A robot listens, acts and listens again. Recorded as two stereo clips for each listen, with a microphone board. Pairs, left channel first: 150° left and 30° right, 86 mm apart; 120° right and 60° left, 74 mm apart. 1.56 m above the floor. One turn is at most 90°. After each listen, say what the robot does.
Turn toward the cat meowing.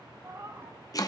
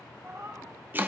Turn 20° left.
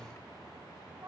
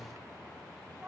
Keep listening.
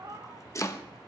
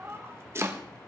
Turn 10° left.
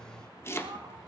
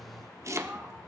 Keep listening.
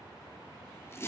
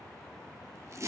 Keep listening.
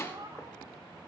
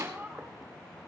Found it: a cat meowing, straight ahead.